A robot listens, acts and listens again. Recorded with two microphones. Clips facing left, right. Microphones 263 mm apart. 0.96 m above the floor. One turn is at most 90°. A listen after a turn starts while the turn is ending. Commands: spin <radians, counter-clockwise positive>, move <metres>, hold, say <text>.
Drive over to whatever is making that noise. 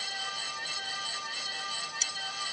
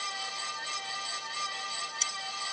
spin 0.52
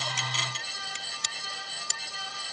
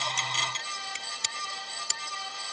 spin -0.52
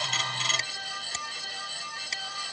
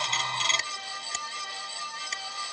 hold
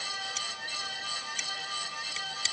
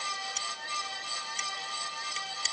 move 1.0
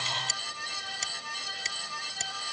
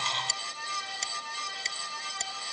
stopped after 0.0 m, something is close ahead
say Something is in my way. I am facing the scissors but have not reached it.